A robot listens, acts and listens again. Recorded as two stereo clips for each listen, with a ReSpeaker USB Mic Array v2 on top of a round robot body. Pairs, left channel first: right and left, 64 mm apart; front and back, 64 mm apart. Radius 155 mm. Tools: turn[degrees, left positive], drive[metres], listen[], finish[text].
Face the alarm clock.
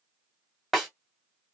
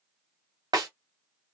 Action: listen[]
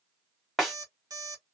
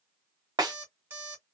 Thought: The alarm clock: 120° left.
Action: turn[120]
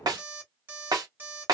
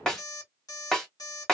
Thought: The alarm clock is now 30° left.
Action: turn[30]
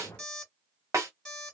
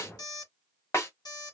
Thought: The alarm clock is now 10° right.
Action: turn[-10]
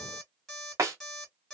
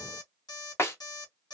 Action: finish[Facing the alarm clock.]